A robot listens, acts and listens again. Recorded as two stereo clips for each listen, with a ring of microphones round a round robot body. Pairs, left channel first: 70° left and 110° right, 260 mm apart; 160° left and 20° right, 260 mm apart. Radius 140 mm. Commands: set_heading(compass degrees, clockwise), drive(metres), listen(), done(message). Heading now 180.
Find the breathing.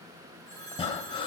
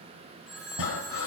set_heading(40)
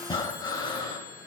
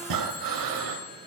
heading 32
set_heading(42)
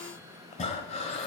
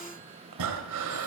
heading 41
done("Facing the breathing.")